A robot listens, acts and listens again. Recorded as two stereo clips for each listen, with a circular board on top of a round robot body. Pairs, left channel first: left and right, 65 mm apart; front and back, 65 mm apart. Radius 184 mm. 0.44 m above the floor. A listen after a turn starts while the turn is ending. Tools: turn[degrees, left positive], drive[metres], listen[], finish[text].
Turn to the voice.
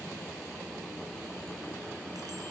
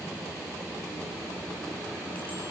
Action: listen[]
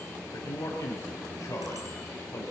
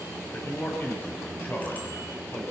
Thought: The man speaking: 55° left.
Action: turn[55]
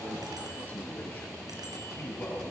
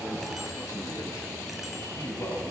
Thought: The man speaking is now 30° left.
Action: turn[30]
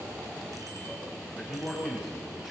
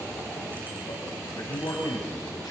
Action: finish[Found it: a man speaking, straight ahead, over 4 m away.]